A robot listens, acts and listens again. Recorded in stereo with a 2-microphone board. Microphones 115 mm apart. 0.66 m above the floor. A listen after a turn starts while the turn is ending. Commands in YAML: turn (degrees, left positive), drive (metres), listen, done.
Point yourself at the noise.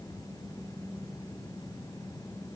listen: true
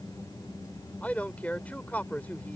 turn: 30
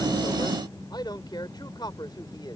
turn: 135
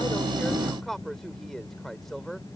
done: "Found it: a man speaking, straight ahead."